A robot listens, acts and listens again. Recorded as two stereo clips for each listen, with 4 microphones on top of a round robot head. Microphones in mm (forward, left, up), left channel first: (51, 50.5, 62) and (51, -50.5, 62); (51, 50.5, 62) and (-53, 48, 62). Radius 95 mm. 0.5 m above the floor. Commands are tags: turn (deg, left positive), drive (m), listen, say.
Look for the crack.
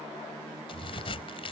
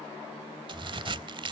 <turn deg="140"/>
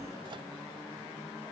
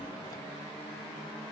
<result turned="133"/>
<say>Facing where the crack came from. I can't hear it now.</say>